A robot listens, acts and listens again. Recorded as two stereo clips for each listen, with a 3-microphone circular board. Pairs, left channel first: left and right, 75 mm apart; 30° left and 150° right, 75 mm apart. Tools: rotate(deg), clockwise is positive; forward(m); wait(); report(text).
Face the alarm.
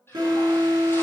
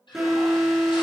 rotate(65)
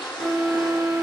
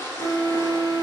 report("Found it: an alarm, straight ahead.")